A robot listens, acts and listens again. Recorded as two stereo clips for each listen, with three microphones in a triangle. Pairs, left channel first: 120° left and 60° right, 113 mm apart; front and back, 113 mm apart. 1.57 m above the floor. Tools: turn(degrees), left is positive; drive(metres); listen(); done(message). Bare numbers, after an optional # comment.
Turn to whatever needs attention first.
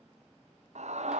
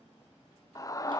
# The scream: 60° right.
turn(-60)
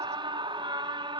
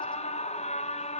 # The scream is now 10° right.
turn(-10)
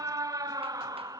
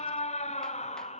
done("Found it: a scream, straight ahead, under 1 m away.")